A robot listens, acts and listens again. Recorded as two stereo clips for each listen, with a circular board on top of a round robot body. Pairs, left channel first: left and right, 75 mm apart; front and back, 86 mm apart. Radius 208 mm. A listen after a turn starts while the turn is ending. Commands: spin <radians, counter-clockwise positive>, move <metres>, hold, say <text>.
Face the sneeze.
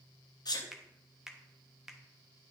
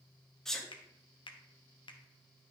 spin 1.48
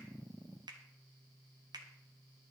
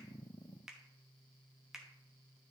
say Facing where the sneeze came from. I can't hear it now.